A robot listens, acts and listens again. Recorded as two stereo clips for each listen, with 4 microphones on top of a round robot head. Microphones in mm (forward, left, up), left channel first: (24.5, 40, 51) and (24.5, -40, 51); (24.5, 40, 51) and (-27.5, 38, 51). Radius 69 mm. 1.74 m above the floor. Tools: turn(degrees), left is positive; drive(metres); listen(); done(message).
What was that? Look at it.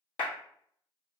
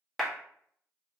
turn(degrees=100)
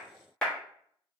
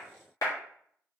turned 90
turn(degrees=10)
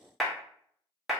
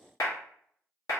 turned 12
done("Facing the clap, 1 to 2 m away.")